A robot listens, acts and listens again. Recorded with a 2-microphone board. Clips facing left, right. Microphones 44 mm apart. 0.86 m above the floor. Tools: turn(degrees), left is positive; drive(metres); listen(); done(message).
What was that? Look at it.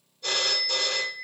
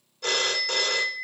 turn(degrees=-90)
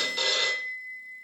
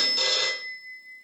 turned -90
turn(degrees=10)
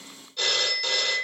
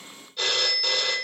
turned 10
done("Found it: a phone ringing, straight ahead.")